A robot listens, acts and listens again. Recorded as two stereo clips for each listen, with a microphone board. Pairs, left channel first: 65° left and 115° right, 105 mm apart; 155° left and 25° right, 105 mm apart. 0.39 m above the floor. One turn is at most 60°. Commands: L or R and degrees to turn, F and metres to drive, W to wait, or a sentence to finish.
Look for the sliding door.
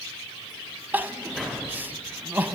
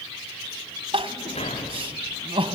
L60
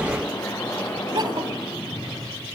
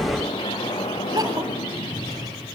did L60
L60
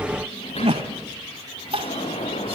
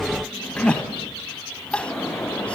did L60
L60
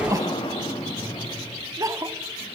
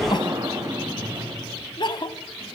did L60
L35
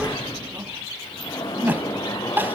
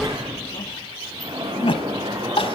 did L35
L20
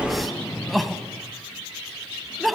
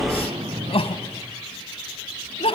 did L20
Facing the sliding door.